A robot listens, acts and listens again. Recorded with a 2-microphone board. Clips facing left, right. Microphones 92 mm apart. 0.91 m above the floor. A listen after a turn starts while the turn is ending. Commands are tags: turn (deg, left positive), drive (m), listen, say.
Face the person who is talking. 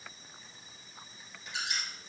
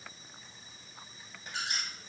<listen/>
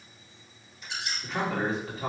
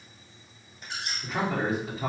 <turn deg="-30"/>
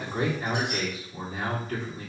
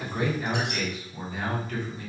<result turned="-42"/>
<turn deg="35"/>
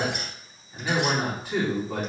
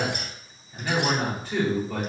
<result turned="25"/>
<turn deg="10"/>
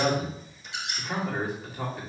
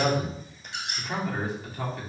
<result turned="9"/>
<say>Facing the man speaking.</say>